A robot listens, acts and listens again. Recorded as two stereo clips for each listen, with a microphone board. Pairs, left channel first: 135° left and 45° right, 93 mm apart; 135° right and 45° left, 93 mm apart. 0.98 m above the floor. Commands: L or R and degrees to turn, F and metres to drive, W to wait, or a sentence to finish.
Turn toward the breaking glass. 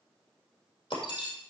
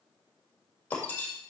L155
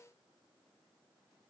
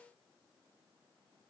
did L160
Facing where the breaking glass came from. I can't hear it now.